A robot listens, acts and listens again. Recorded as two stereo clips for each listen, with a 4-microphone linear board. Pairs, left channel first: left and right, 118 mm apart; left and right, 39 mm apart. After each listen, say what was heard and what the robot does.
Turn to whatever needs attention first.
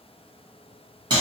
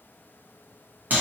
Keep listening.
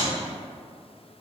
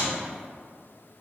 Keep listening.
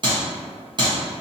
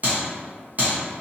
I can't make out anything urgent to turn to.